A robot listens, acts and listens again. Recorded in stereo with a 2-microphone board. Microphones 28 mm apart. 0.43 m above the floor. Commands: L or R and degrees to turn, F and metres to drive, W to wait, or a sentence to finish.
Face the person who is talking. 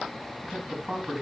R20
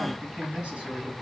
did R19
R140
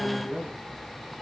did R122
R15
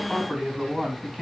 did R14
Facing the man speaking, 2 to 4 m away.